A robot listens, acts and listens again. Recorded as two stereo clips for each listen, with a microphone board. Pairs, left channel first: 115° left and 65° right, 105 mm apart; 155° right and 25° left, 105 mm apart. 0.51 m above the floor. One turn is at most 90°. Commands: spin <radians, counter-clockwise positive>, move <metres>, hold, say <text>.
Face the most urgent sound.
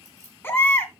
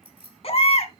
spin 1.57
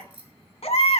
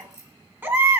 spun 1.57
spin 1.57
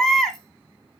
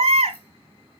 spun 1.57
spin 0.44
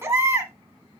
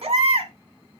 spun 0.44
say Found it: a baby crying, straight ahead, 1 to 2 m away.